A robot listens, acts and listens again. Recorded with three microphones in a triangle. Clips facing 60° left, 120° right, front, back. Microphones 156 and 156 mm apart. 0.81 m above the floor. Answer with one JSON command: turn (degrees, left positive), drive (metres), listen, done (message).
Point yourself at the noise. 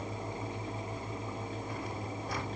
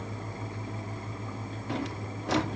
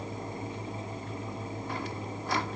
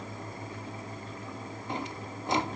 {"turn": -110}
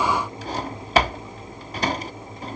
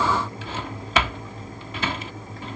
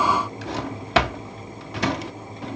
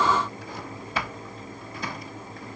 {"done": "Found it: a drawer, straight ahead."}